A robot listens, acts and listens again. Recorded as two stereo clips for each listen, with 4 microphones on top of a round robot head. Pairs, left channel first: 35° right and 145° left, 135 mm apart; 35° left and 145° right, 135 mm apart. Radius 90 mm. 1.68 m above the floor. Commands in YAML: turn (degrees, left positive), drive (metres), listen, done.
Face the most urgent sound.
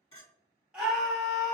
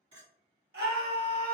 turn: -135
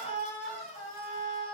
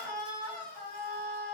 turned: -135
turn: 10
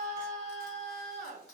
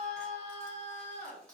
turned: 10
done: "Facing the scream."